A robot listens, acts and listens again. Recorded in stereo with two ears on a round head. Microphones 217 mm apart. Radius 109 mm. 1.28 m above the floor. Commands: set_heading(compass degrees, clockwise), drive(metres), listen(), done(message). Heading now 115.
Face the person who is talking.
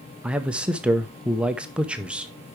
set_heading(145)
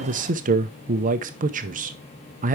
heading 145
set_heading(290)
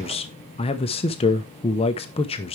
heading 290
set_heading(265)
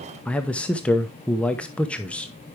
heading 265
done("Facing the man speaking.")